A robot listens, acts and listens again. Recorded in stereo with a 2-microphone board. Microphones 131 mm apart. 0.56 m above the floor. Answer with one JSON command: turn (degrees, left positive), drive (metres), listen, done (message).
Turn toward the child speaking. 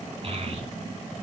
{"turn": -45}
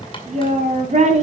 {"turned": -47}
{"turn": -60}
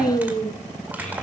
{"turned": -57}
{"turn": 10}
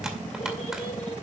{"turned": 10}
{"listen": true}
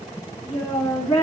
{"turn": 15}
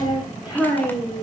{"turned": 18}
{"done": "Found it: a child speaking, straight ahead."}